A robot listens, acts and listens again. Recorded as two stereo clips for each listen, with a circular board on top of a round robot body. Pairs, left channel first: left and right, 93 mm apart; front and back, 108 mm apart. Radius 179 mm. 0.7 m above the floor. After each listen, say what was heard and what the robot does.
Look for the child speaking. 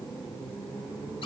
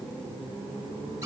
Keep listening.
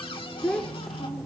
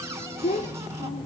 Facing the child speaking.